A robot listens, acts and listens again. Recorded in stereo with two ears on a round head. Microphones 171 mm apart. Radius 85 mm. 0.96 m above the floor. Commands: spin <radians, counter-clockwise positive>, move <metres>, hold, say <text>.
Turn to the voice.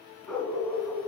hold
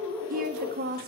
spin -0.79
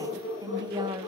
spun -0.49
spin -0.35
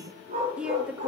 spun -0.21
say Facing the woman speaking.